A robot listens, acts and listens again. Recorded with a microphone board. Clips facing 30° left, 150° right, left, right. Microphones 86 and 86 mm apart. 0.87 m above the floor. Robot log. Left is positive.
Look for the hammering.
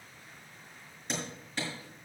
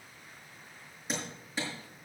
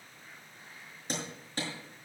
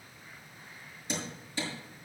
note: The hammering: 125° left.
cmd yaw +125
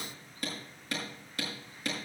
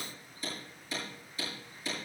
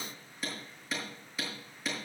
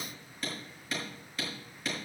end: Facing the hammering, over 4 m away.